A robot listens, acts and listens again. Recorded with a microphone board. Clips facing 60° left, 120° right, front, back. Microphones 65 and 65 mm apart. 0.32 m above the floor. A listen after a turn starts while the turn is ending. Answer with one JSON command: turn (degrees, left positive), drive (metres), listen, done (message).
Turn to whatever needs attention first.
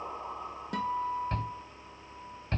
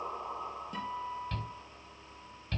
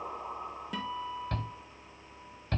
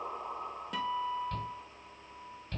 {"turn": 10}
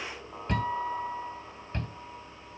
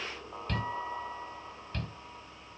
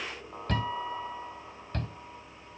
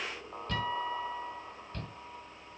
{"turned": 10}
{"done": "Found it: a shout, straight ahead."}